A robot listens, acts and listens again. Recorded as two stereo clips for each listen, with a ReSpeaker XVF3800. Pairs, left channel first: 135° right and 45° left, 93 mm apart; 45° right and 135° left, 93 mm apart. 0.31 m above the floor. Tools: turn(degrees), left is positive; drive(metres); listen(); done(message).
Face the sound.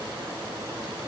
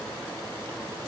listen()
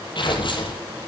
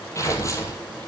turn(degrees=-100)
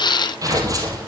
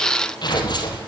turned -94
done("Facing the tearing paper, 2 to 4 m away.")